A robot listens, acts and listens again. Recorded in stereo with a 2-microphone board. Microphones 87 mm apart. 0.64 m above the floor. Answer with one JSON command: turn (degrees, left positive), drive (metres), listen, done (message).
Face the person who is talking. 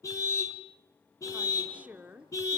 {"turn": -20}
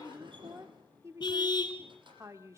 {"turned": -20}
{"turn": -140}
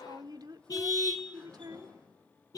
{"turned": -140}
{"turn": -60}
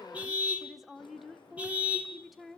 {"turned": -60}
{"done": "Found it: a woman speaking, straight ahead."}